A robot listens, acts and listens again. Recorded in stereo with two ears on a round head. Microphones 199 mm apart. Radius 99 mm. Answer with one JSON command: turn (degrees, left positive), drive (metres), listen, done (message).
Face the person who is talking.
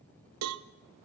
{"listen": true}
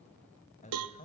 {"turn": 35}
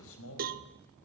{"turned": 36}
{"turn": 110}
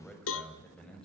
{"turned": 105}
{"done": "Found it: a man speaking, straight ahead."}